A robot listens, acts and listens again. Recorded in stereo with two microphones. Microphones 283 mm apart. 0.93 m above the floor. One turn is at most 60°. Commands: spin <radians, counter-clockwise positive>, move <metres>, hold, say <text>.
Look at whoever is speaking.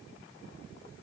hold
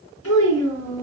spin 0.96
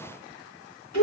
spin 1.05
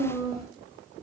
spin 0.52
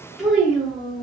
say Found it: a child speaking, straight ahead, under 1 m away.